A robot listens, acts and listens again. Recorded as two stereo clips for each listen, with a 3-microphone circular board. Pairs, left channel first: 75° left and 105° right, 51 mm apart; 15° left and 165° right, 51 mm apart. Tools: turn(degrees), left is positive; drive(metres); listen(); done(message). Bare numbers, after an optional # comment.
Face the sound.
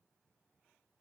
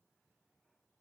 listen()
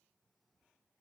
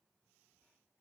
listen()
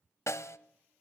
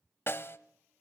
# The snare drum: 55° left.
turn(55)
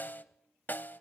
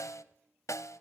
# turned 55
# The snare drum is now 25° left.
turn(25)
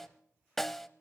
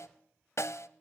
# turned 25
# The snare drum is now 10° right.
turn(-10)
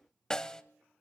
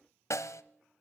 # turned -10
done("Found it: a snare drum, straight ahead.")